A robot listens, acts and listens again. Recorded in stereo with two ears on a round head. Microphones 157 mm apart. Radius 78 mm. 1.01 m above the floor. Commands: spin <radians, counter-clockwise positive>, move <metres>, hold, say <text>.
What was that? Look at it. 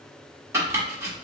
spin -0.26
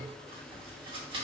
hold
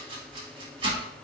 spin -2.62
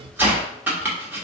spin -0.17
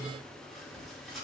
hold
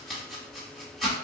say Found it: chopping, straight ahead.